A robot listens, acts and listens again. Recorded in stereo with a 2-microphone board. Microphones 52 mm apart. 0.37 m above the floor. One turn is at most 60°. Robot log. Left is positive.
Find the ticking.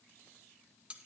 cmd idle
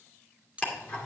note: The ticking: about 30° left or 150° left.
cmd yaw +30
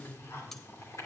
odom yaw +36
note: So it is at 110° left.
cmd yaw +60
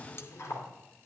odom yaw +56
note: The ticking is now 55° left.
cmd yaw +55
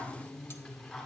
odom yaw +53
end: Found it: ticking, straight ahead.